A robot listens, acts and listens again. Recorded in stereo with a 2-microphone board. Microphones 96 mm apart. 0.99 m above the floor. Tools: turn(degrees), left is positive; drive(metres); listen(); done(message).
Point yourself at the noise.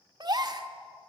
turn(degrees=-45)
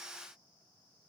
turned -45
listen()
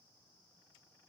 done("I heard a gasp, but can't make it out now. It was about straight ahead or 90° right.")